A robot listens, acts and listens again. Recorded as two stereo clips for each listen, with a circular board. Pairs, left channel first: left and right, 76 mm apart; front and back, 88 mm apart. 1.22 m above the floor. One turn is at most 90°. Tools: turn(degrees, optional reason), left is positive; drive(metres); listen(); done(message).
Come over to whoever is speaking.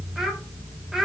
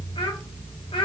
drive(metres=1.0)
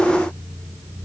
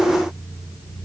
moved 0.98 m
listen()
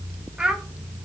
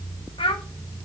turn(degrees=-10, reason="The child speaking is now 10° right.")
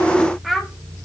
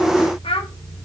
drive(metres=1.0)
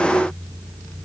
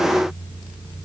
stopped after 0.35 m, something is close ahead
listen()
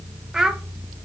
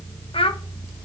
done("Arrived at the child speaking, straight ahead.")